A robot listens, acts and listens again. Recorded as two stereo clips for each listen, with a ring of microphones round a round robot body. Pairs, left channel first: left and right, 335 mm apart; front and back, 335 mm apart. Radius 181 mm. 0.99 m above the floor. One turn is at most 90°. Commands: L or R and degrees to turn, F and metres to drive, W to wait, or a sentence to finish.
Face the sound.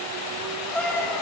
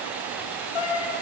Found it: a cat meowing, straight ahead.